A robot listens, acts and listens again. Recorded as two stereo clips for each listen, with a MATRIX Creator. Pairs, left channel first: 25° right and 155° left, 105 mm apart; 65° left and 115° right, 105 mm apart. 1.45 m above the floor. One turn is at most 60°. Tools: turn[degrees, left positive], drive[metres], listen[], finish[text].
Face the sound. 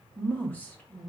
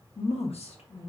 Thought: The woman speaking: 55° left.
Action: turn[55]
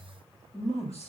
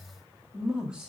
Thought: The woman speaking is now 30° right.
Action: turn[-30]
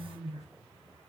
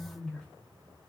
Thought: The woman speaking is now 15° right.
Action: turn[-15]
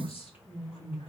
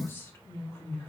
Action: finish[Found it: a woman speaking, straight ahead.]